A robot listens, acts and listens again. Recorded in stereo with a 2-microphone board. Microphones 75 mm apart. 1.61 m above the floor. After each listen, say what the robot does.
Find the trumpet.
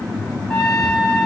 Turn 30° left.
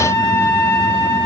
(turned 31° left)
Turn 140° left.
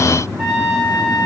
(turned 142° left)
Found it: a trumpet, straight ahead, 2 to 4 m away.